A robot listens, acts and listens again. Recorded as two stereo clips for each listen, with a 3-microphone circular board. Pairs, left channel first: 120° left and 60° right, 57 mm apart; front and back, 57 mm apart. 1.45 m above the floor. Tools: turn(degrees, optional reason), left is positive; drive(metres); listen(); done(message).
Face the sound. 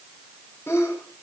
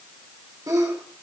turn(degrees=165, reason="The sneeze: 165° left.")
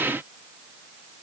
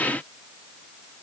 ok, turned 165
done("Facing where the sneeze came from. I can't hear it now.")